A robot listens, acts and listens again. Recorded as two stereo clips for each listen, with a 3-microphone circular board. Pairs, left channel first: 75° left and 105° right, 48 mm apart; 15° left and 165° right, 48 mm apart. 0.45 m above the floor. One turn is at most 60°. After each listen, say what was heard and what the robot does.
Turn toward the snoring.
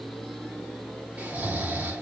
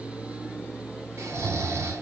The snoring: 160° right. Turn 60° right.
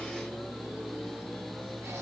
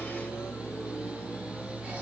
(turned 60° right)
Nothing new. It was at 100° right. Turn 60° right.
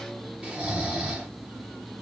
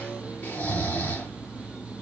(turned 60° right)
The snoring is now 35° right. Turn 35° right.
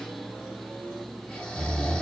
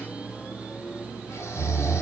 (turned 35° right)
Found it: snoring, straight ahead.